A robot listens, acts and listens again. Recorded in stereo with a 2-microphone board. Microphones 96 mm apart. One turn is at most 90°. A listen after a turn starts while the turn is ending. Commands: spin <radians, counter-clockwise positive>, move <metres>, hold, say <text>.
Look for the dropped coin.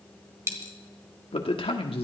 spin -0.52
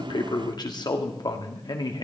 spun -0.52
hold
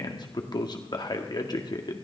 say I heard a dropped coin, but can't make it out now. It was about straight ahead or 120° right.